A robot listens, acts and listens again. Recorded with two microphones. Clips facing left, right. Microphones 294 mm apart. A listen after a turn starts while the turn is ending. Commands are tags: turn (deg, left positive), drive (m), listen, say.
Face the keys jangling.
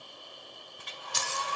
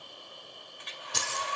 <turn deg="-60"/>
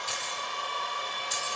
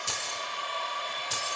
<turn deg="-70"/>
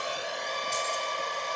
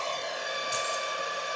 <listen/>
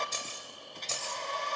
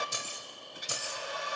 <turn deg="-15"/>
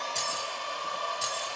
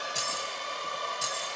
<listen/>
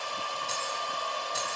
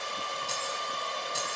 <say>Found it: keys jangling, straight ahead, over 4 m away.</say>